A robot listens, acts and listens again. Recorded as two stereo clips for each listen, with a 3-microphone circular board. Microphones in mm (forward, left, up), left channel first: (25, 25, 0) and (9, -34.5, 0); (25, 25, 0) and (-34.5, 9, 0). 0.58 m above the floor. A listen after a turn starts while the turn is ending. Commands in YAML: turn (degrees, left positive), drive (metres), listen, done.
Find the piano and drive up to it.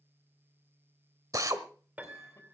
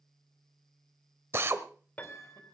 turn: -45
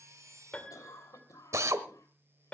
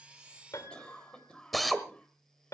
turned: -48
drive: 1.0
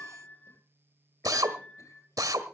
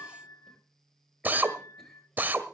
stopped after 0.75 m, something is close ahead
done: "Arrived at the piano, straight ahead."